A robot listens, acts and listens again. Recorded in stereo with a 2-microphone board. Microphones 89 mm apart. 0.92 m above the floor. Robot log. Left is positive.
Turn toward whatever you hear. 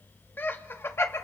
note: The laughter: about 30° left or 150° left.
cmd yaw +30
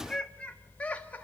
note: The laughter: about 20° left or 160° left.
cmd yaw +20
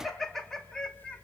note: So it is at 10° left.
cmd yaw +10
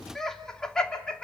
note: The laughter is now 10° left.
cmd yaw +10
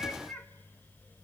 note: The laughter is now 10° left.
cmd yaw +10
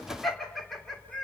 end: Facing the laughter.